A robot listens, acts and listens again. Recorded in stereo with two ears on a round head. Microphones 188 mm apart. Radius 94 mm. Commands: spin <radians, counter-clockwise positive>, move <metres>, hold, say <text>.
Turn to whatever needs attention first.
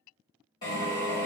hold
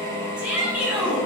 spin -0.52
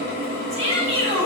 spin 0.35
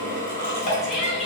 say Found it: a shout, straight ahead, 1 to 2 m away.